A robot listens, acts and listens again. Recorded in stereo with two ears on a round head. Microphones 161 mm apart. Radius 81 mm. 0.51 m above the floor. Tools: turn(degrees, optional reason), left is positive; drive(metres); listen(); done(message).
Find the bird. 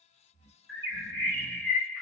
turn(degrees=30)
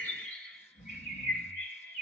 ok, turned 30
turn(degrees=130, reason="So it is at 130° left.")
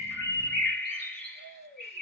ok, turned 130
turn(degrees=10, reason="The bird is now 10° left.")
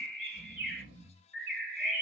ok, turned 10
done("Facing the bird.")